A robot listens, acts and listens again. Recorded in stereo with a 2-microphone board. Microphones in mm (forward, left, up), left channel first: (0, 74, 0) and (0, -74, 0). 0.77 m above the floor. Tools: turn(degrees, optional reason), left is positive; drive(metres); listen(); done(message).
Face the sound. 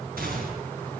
turn(degrees=-90)
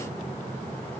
done("Facing where the gunshot came from. I can't hear it now.")